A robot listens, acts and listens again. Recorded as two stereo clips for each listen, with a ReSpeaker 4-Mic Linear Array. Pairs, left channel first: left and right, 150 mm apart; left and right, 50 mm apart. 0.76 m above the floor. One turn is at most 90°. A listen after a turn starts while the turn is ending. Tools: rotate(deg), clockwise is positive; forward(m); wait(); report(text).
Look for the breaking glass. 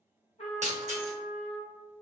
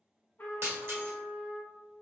rotate(50)
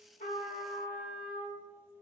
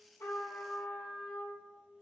wait()
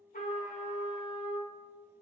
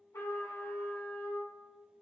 report("I heard breaking glass, but can't make it out now. It was about straight ahead or 80° right.")